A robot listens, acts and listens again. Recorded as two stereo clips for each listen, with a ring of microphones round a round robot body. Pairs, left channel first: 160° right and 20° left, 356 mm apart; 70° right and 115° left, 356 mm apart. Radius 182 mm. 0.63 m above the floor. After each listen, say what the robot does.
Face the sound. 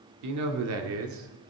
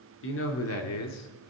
Turn 25° right.
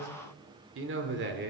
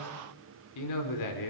Turn 40° right.
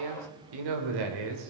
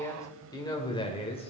Facing the man speaking.